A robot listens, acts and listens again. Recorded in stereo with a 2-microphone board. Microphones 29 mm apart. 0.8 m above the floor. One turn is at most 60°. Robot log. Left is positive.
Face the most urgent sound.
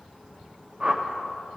cmd idle
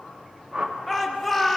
cmd yaw +30
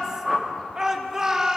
note: So it is at 25° right.
cmd yaw -25
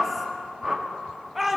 note: The shout is now 10° right.
cmd yaw -10
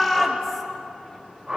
end: Facing the shout, 1 to 2 m away.